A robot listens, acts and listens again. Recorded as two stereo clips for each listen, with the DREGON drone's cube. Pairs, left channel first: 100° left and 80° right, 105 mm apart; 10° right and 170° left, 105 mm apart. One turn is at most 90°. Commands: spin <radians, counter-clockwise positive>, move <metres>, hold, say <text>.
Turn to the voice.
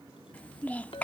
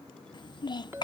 spin 0.44
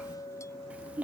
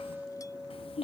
say Found it: a child speaking, straight ahead.